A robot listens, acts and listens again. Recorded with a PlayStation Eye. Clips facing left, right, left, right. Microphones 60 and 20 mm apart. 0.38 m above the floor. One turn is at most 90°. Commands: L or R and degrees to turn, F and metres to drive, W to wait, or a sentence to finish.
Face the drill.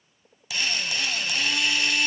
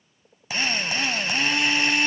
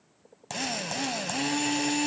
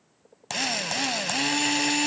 R35
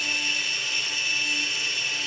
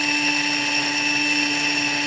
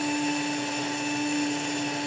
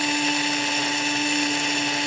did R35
R90
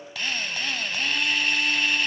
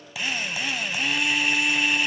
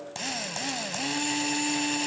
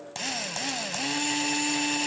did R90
R10
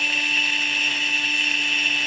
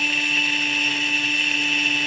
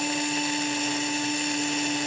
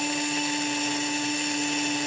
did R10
Facing the drill, under 1 m away.